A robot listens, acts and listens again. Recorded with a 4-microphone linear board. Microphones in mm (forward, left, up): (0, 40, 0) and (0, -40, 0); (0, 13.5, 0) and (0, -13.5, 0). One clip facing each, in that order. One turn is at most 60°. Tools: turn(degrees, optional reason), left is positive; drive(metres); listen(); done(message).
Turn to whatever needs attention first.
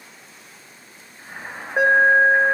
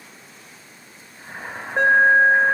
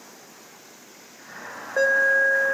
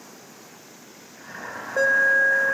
turn(degrees=30)
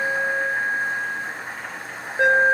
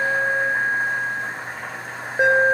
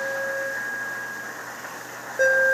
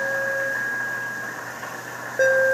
turn(degrees=-15, reason="So it is at 15° right.")
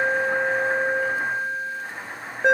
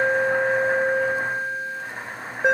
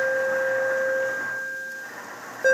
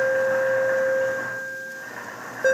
done("Facing the alarm.")